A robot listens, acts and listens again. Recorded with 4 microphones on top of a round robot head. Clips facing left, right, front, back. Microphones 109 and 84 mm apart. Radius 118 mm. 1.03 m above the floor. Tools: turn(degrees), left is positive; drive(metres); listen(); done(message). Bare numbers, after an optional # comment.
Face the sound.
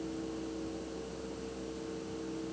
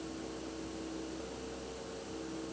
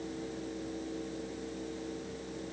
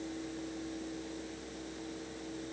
listen()
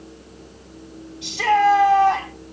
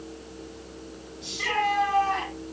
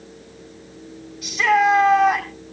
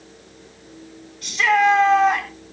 # The shout: 85° left.
turn(85)
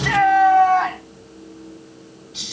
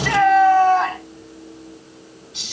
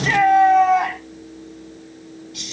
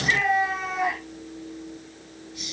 done("Found it: a shout, straight ahead, over 4 m away.")